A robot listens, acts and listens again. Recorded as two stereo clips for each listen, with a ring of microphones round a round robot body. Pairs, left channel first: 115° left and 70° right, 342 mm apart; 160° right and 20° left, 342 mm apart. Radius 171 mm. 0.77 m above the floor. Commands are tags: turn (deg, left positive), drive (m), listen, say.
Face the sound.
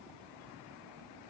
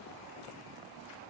<listen/>
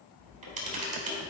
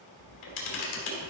<turn deg="-135"/>
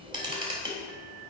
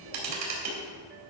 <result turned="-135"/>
<turn deg="10"/>
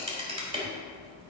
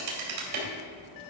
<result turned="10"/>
<say>Facing the camera shutter, 2 to 4 m away.</say>